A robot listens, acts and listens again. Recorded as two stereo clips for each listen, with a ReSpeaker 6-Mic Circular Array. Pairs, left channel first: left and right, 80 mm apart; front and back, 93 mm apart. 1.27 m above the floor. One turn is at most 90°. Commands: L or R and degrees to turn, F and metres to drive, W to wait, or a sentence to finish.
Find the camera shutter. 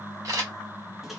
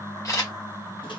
R50
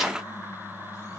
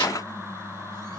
W
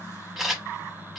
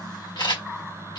Found it: a camera shutter, straight ahead, 1 to 2 m away.